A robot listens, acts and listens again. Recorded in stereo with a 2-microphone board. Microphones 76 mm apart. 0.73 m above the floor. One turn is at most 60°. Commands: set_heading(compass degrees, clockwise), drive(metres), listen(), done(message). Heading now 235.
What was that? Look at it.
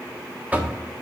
set_heading(255)
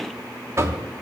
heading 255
set_heading(315)
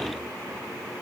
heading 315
set_heading(15)
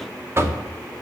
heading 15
set_heading(55)
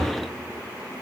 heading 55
set_heading(65)
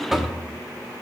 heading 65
done("Facing the knocking, 1 to 2 m away.")